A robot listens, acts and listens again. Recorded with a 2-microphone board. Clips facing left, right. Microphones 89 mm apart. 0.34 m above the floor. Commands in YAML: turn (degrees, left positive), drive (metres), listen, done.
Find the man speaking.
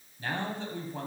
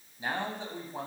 turn: -15
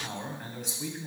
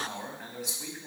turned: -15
done: "Found it: a man speaking, straight ahead."